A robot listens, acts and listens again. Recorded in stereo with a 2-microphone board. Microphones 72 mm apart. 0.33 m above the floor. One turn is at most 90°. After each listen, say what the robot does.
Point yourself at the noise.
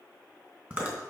Turn 20° right.
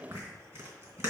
Turn 90° right.
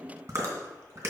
Turn 40° right.
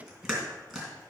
Facing the chewing, 2 to 4 m away.